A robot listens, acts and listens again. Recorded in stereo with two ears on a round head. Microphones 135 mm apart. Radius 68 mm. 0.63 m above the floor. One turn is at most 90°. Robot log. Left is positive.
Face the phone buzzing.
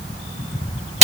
cmd idle
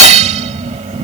cmd idle
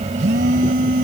cmd yaw -90
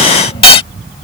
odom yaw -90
cmd idle
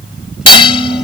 end: Found it: a phone buzzing, straight ahead.